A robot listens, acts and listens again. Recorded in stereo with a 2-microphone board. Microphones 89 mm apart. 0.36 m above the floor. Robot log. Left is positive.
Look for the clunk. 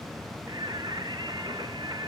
cmd idle
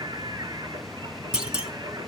cmd yaw -30
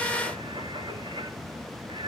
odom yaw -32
cmd idle
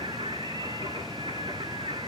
end: I heard a clunk, but can't make it out now. It was about 25° left or 140° right.